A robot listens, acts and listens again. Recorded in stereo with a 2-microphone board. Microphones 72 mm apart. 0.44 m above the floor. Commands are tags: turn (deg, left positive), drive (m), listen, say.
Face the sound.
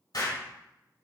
<turn deg="60"/>
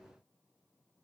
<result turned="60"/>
<listen/>
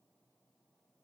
<say>I heard an explosion, but can't make it out now. It was about straight ahead or 60° left.</say>